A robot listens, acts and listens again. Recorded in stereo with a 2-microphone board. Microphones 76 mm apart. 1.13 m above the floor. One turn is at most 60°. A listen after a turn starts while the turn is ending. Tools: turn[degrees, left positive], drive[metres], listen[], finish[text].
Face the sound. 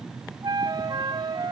Thought: The flute: about 70° right or 110° right.
Action: turn[-60]
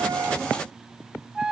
Thought: So it is at 10° right.
Action: turn[-10]
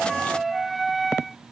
Action: finish[Facing the flute.]